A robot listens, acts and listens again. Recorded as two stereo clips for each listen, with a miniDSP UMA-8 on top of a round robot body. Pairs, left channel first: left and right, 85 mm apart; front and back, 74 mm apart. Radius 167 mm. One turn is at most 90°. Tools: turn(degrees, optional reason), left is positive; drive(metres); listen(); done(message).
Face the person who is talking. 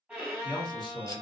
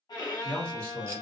turn(degrees=75, reason="The man speaking: 75° left.")
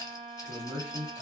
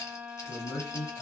turn(degrees=-15, reason="The man speaking is now 15° right.")
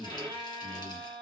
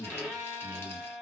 done("Found it: a man speaking, straight ahead.")